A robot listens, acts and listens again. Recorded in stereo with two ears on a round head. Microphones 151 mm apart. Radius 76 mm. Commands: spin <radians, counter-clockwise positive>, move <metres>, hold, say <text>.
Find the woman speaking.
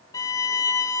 hold
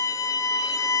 hold
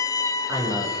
spin -0.52
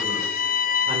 hold
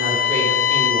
hold
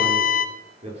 spin -2.53
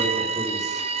hold
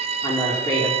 spin 0.35
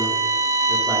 hold
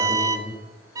say Found it: a woman speaking, straight ahead, over 4 m away.